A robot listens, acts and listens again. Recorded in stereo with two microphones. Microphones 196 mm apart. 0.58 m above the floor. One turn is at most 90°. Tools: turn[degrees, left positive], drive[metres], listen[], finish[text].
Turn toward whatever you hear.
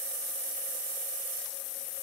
Action: listen[]
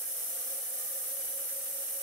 Action: listen[]
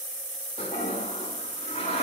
Thought: The toilet flushing: about 35° left or 145° left.
Action: turn[35]
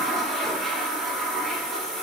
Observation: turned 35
Action: finish[Facing the toilet flushing.]